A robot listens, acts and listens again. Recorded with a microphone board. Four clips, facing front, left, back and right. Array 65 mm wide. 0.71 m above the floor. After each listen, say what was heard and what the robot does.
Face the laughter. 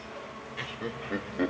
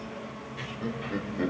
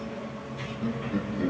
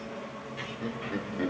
Found it: laughter, straight ahead, 2 to 4 m away.